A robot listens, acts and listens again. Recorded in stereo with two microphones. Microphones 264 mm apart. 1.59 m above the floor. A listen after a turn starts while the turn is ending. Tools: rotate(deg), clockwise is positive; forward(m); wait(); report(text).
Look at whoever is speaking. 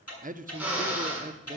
rotate(30)
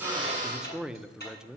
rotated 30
report("Found it: a man speaking, straight ahead, under 1 m away.")